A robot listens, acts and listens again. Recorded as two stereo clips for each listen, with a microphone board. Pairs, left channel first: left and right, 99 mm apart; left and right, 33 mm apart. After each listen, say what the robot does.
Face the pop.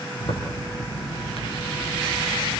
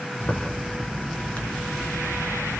Keep listening.
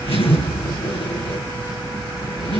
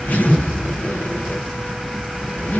Keep listening.
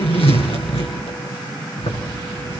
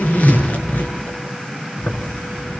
I can't make out a pop, only a zipper.